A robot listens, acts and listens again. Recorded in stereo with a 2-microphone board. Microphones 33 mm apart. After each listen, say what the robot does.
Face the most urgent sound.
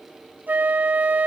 Keep listening.
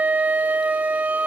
Keep listening.
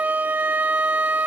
I can't make out anything urgent, only a flute.